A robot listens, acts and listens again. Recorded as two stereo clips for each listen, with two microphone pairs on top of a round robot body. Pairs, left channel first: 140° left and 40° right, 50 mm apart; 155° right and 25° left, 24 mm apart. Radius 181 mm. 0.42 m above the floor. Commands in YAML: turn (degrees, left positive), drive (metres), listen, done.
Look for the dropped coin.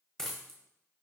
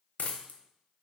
turn: -140
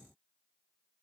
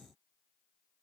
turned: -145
done: "I heard a dropped coin from this way, but can't make it out now."